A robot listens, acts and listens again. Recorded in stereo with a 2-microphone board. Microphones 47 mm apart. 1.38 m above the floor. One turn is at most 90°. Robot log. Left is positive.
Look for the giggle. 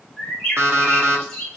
cmd idle
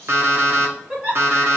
note: The giggle: about 25° right or 155° right.
cmd yaw -25
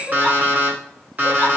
cmd idle
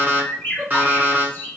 cmd idle
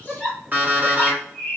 end: Found it: a giggle, straight ahead, 1 to 2 m away.